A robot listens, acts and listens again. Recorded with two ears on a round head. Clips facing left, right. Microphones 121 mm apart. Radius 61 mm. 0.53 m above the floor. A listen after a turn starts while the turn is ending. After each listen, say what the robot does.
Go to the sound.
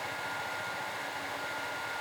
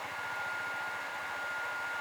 Keep listening.
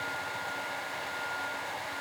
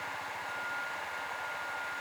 Keep listening.
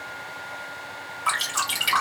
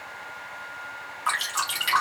Turn 30° left.
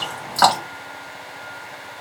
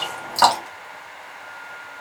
Turn 20° right.
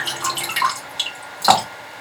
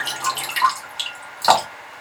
Drive 1.0 m forward.
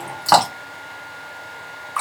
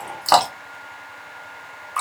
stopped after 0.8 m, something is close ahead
Turn 10° right.
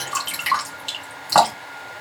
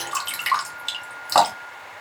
I am next to the dripping.